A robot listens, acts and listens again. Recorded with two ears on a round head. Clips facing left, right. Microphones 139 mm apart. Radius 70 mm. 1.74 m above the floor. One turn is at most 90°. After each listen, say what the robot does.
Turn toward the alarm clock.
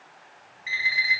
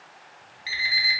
Turn 40° right.
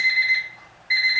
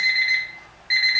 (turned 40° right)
Turn 90° right.
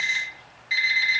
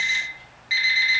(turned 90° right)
Facing the alarm clock.